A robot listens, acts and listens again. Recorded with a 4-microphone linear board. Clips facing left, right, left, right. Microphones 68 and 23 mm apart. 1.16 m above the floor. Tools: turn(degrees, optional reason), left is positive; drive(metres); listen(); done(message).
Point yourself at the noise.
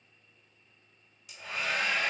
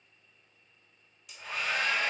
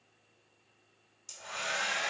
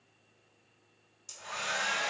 turn(degrees=30)
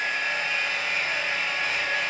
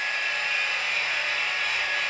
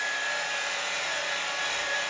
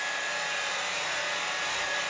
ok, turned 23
turn(degrees=155, reason="So it is at 155° left.")
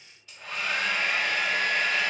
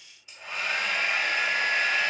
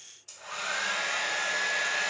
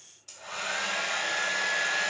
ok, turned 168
turn(degrees=-15, reason="The hair dryer is now 15° right.")
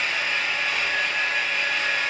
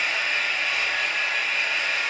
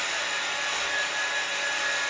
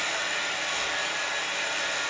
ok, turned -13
done("Found it: a hair dryer, straight ahead, 1 to 2 m away.")